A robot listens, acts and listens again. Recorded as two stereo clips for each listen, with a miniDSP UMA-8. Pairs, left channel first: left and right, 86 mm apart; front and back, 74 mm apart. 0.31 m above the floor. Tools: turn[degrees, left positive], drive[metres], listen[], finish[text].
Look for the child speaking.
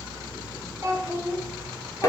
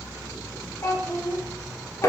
Thought: The child speaking: 35° right.
Action: turn[-35]
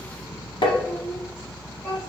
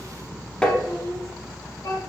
Thought: The child speaking is now 25° left.
Action: turn[25]
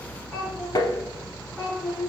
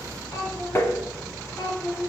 Thought: The child speaking is now 10° left.
Action: turn[10]
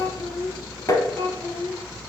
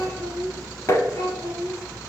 Action: finish[Found it: a child speaking, straight ahead.]